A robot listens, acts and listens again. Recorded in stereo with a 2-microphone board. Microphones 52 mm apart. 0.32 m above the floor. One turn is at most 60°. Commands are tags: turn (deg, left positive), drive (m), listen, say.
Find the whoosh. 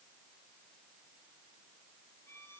<listen/>
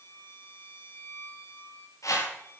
<turn deg="60"/>
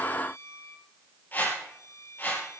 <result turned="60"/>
<turn deg="35"/>
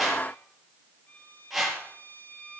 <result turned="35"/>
<say>Facing the whoosh, over 4 m away.</say>